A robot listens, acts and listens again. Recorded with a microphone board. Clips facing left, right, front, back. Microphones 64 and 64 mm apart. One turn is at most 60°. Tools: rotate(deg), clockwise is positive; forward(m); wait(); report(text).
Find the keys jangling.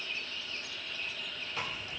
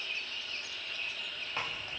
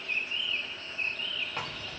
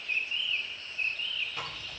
wait()
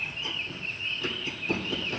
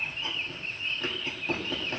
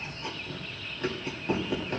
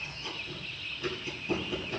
wait()
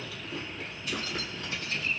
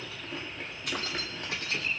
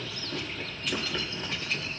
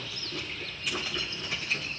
rotate(60)
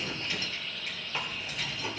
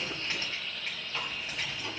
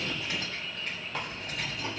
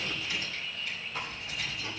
rotate(35)
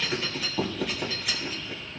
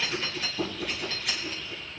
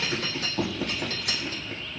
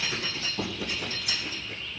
report("Found it: keys jangling, straight ahead, 2 to 4 m away.")